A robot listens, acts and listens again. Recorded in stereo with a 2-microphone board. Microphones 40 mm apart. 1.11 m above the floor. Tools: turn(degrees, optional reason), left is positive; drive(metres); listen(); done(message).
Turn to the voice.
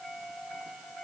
listen()
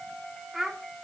turn(degrees=30)
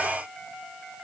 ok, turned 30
listen()
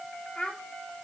turn(degrees=155, reason="So it is at 155° left.")
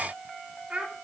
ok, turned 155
turn(degrees=-30, reason="The child speaking is now 30° right.")
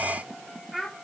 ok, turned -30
done("Found it: a child speaking, straight ahead, 2 to 4 m away.")